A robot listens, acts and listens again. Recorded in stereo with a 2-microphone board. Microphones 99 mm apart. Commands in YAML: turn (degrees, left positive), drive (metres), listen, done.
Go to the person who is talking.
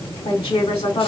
turn: 70
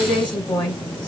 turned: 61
turn: 50
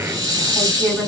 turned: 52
drive: 1.0
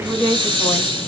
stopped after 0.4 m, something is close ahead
done: "Something is in my way. I am facing the woman speaking but have not reached it."